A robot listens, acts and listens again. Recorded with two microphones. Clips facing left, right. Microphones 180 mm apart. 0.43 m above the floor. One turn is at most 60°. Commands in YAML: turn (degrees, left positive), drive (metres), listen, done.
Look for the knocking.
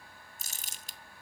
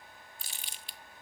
listen: true
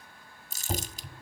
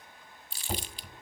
turn: 30
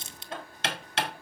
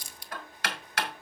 turn: 60
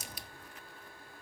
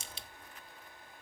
turn: 60
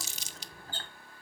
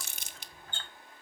turn: 40
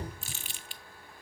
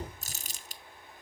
listen: true
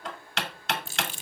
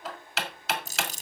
done: "Found it: knocking, straight ahead, 1 to 2 m away."